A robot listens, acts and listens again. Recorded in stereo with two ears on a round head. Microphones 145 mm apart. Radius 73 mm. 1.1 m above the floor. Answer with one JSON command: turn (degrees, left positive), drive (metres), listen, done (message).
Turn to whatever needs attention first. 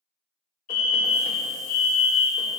{"turn": 55}
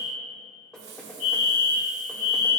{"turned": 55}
{"turn": 60}
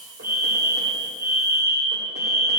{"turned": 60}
{"turn": -20}
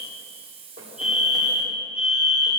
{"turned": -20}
{"done": "Facing the fire alarm, 2 to 4 m away."}